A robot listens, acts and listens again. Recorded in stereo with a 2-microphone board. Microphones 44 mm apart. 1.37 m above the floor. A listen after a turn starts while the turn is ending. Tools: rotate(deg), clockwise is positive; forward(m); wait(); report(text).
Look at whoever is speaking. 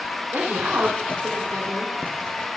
rotate(90)
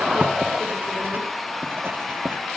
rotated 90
wait()
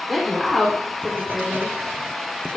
report("Found it: a woman speaking, straight ahead, 2 to 4 m away.")